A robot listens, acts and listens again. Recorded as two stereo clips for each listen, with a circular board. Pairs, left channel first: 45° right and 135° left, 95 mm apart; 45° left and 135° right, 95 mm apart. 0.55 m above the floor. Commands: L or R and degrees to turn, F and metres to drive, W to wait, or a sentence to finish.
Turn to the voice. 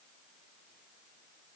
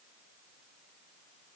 W
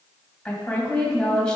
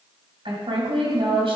R125
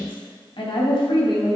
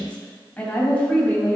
R30
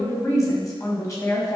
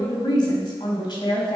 L10
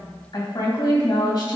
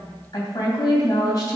Found it: a woman speaking, straight ahead, 2 to 4 m away.